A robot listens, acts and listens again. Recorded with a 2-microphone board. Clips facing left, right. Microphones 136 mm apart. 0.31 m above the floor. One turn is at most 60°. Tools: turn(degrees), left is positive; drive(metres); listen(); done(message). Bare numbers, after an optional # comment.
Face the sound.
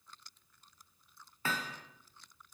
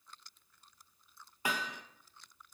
turn(-30)
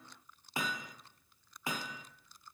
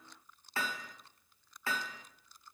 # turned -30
# So it is at 15° left.
turn(15)
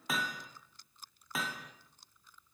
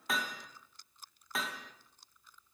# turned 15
done("Facing the hammering, 1 to 2 m away.")